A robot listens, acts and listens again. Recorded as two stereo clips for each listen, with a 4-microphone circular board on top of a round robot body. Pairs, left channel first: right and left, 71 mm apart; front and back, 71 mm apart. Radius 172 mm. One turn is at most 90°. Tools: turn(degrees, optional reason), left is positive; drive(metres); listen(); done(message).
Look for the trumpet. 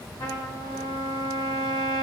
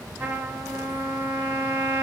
turn(degrees=-90, reason="The trumpet: 120° right.")
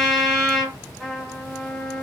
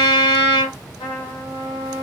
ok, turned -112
done("Found it: a trumpet, straight ahead, 1 to 2 m away.")